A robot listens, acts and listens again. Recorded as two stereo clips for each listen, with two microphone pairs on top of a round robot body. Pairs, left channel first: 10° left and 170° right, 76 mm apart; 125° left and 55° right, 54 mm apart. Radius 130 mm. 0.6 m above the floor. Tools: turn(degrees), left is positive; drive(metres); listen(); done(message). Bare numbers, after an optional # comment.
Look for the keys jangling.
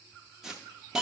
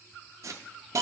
listen()
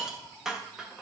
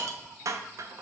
listen()
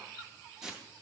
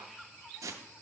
done("I can't make out keys jangling, only a hiss.")